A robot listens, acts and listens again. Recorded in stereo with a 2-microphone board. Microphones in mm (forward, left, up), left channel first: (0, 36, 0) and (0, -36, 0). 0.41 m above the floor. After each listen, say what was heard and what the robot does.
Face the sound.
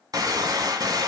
The gunshot: about 65° right or 115° right. Turn 65° right.
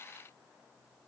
Keep listening.
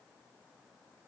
I heard a gunshot, but can't make it out now. It was about straight ahead or 50° right.